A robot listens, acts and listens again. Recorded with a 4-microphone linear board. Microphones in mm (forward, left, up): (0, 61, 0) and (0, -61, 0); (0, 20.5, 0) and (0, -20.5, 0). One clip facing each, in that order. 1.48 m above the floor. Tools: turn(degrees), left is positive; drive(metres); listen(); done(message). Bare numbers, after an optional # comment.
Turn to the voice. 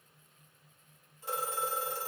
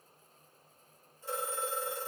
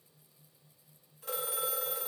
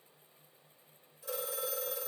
listen()
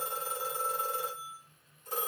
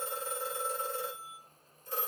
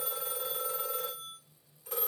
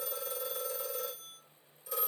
listen()
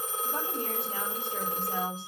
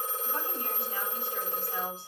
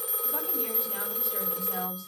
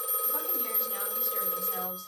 # The woman speaking: about 45° left or 135° left.
turn(45)
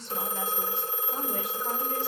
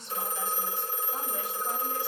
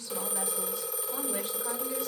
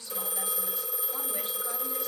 # So it is at 85° left.
turn(85)
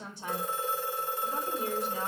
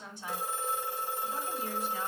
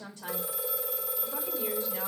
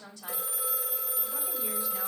# The woman speaking is now 35° left.
turn(35)
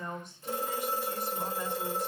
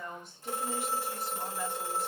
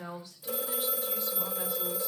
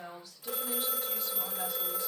done("Facing the woman speaking.")